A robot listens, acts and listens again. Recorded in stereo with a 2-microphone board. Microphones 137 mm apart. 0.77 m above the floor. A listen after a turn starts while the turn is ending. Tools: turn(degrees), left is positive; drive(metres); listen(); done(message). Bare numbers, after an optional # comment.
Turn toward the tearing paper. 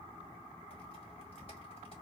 listen()
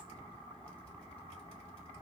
listen()
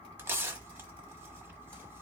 # The tearing paper: about 15° right or 165° right.
turn(-15)
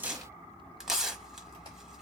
done("Facing the tearing paper, 1 to 2 m away.")